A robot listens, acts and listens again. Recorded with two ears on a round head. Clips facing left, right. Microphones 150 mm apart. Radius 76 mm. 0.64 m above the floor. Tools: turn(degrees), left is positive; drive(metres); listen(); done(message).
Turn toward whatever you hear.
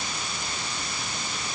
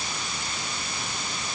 listen()
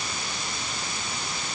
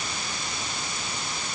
listen()
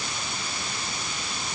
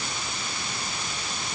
done("I can't make out anything.")